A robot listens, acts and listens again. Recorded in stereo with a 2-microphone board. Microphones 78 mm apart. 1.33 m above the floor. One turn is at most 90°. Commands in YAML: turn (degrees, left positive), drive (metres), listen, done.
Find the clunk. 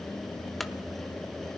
turn: 30
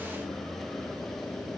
listen: true
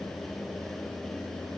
done: "I heard a clunk, but can't make it out now. It was about 30° right or 150° left."